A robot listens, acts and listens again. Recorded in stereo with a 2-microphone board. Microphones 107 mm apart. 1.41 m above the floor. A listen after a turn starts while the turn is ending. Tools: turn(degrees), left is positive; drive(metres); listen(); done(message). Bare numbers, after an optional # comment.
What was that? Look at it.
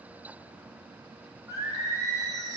# The singing: about 35° right or 145° right.
turn(-35)
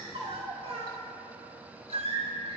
# So it is at 110° right.
turn(-110)
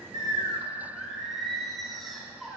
done("Found it: singing, straight ahead.")